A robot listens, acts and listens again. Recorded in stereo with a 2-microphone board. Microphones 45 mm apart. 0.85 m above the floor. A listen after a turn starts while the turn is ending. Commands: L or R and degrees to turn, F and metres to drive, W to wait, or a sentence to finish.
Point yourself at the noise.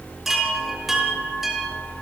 R30
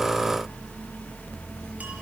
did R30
W
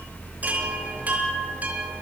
W
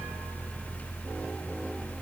I heard a chime, but can't make it out now. It was about 25° left or 145° right.